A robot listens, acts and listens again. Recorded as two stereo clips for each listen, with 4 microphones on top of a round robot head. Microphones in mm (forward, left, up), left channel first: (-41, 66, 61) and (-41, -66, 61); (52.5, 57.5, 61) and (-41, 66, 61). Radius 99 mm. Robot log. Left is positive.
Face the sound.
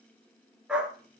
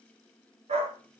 note: The dog barking: 175° right.
cmd yaw -175
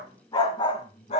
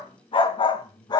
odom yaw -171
note: The dog barking is now 40° left.
cmd yaw +40
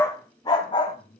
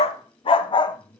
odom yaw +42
note: The dog barking is now 35° left.
cmd yaw +35
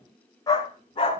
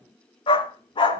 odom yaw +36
note: The dog barking is now 30° left.
cmd yaw +30
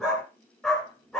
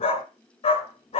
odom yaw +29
end: Found it: a dog barking, straight ahead, 1 to 2 m away.